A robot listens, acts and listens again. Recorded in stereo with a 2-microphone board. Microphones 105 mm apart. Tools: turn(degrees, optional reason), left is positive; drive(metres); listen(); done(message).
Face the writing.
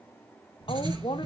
turn(degrees=-40, reason="The writing: about 40° right or 140° right.")
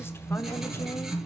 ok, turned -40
done("Facing the writing.")